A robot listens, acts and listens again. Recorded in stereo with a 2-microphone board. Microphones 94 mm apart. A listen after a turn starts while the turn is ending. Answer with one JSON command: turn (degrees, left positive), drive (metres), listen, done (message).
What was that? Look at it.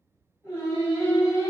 {"turn": 25}
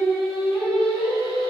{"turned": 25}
{"done": "Facing the singing, 1 to 2 m away."}